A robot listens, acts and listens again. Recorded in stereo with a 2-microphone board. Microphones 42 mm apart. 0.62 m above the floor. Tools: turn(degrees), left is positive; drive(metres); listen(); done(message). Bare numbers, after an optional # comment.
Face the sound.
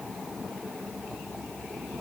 listen()
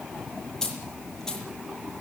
turn(30)
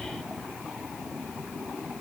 listen()
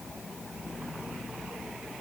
done("I heard a dropped coin, but can't make it out now. It was about 20° right or 140° left.")